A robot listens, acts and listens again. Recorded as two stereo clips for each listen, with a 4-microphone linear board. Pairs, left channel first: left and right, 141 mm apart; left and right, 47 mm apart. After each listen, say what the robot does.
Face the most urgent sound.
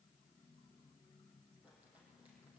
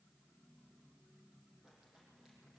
Keep listening.
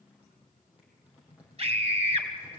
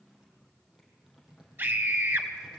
Turn 45° right.
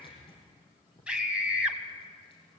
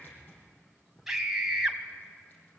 Turn 10° right.
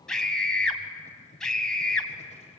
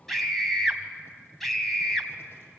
Facing the scream.